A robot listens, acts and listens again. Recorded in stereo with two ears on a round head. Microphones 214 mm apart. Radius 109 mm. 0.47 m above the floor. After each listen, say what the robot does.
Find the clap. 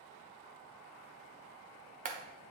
Turn 35° right.
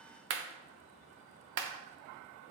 Turn 105° right.
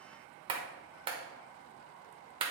Turn 25° right.
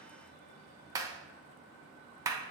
Turn 15° right.
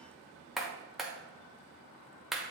Found it: a clap, straight ahead, 1 to 2 m away.